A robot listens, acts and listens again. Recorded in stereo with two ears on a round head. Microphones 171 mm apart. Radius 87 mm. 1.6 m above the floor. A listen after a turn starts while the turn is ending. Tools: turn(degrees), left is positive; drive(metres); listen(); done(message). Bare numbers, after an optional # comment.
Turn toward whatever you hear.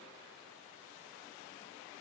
listen()
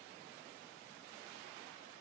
listen()
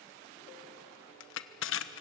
# The crushing: about 65° left or 115° left.
turn(65)
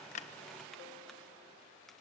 listen()
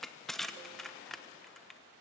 done("Facing the crushing, 1 to 2 m away.")